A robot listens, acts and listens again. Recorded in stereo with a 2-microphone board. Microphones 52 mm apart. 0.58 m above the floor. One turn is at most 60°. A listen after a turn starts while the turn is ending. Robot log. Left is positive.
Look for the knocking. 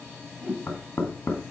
cmd yaw +60
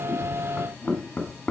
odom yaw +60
note: So it is at 40° left.
cmd yaw +40
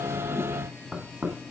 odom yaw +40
note: The knocking is now 15° right.
cmd yaw -15
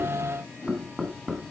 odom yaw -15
end: Found it: knocking, straight ahead.